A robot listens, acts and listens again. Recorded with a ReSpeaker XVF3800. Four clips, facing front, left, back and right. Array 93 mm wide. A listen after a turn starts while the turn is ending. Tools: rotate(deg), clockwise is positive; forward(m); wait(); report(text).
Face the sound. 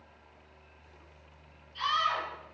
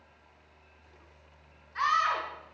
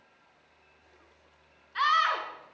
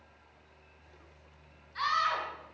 rotate(-160)
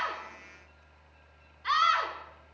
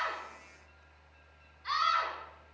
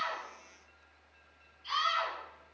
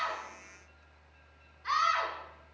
rotate(10)
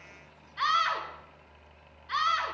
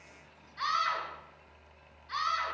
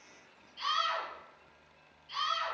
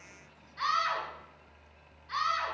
report("Found it: a scream, straight ahead, 2 to 4 m away.")